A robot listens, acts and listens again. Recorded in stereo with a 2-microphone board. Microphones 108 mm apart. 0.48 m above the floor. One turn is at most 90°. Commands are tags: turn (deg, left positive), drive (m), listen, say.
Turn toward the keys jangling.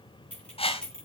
<turn deg="30"/>
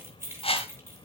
<turn deg="-25"/>
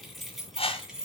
<say>Facing the keys jangling.</say>